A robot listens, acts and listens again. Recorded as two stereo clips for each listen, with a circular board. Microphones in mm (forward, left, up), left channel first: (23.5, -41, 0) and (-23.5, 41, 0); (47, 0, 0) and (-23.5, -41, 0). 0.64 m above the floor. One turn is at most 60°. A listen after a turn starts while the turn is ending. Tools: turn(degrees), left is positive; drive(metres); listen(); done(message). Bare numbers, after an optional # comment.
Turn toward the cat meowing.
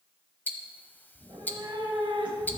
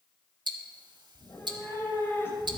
# The cat meowing: 95° left.
turn(60)
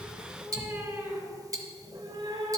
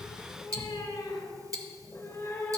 # The cat meowing is now 90° left.
turn(60)
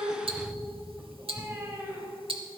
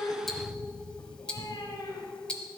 # The cat meowing is now 60° left.
turn(60)
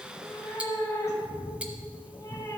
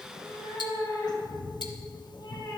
done("Found it: a cat meowing, straight ahead, 1 to 2 m away.")